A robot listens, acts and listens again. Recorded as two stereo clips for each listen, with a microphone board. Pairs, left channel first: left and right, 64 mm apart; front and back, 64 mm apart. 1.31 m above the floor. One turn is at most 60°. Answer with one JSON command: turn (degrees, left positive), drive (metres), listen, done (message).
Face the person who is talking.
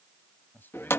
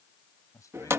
{"turn": 30}
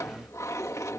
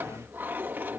{"listen": true}
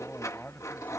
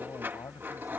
{"turn": 25}
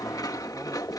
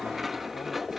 {"listen": true}
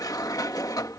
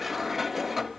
{"listen": true}
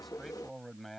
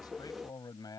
{"done": "Found it: a man speaking, straight ahead."}